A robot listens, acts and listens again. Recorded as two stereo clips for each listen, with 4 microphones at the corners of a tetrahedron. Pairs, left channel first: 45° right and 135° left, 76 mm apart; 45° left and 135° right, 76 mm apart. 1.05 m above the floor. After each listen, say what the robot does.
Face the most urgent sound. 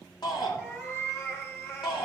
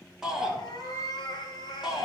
Turn 55° right.
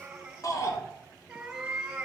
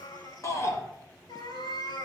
Facing the shout, 2 to 4 m away.